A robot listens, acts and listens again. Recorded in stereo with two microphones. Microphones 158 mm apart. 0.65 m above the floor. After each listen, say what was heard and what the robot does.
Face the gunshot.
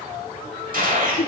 The gunshot: about 65° right or 115° right. Turn 65° right.
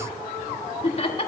Keep listening.
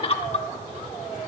I heard a gunshot, but can't make it out now. It was about straight ahead or 50° right.